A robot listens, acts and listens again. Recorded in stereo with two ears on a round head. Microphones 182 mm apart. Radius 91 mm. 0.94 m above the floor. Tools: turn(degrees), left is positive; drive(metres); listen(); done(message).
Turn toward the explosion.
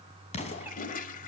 turn(degrees=35)
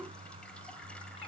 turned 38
listen()
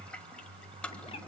done("I heard an explosion, but can't make it out now. It was about 5° right or 110° left.")